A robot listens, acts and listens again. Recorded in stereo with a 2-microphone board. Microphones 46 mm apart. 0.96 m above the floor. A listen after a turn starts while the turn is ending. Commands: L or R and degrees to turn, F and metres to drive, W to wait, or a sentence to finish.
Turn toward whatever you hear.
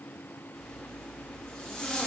L25
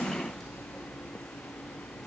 Found it: a zipper, straight ahead.